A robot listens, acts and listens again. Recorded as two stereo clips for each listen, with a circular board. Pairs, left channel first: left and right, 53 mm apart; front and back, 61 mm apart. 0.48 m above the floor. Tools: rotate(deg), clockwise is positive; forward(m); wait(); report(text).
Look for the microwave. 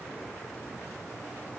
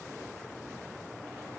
wait()
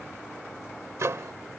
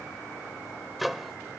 rotate(90)
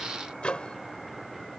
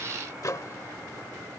rotate(-20)
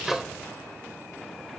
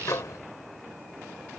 report("Found it: a microwave, straight ahead.")